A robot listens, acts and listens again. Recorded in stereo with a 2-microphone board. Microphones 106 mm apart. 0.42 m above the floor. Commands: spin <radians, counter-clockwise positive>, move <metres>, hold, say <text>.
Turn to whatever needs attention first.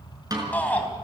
spin 0.52
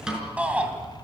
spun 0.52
spin -0.26
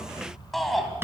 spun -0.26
say Found it: a shout, straight ahead, 2 to 4 m away.